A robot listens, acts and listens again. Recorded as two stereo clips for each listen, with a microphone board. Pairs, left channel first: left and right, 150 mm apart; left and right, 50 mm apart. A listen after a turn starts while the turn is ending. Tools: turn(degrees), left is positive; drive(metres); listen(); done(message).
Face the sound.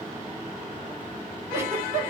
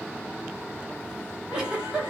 turn(degrees=-15)
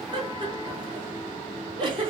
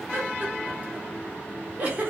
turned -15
turn(degrees=-145)
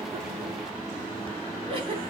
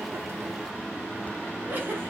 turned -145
turn(degrees=-40)
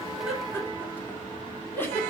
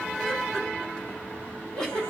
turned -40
turn(degrees=15)
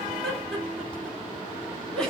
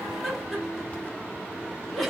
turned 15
done("Found it: a giggle, straight ahead.")